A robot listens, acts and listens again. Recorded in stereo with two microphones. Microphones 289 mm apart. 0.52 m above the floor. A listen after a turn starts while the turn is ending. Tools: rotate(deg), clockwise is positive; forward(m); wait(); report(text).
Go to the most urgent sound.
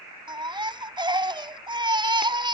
rotate(15)
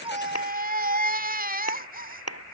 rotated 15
rotate(150)
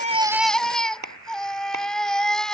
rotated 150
forward(1.0)
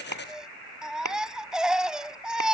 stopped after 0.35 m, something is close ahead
report("Blocked. The baby crying is further on, straight ahead.")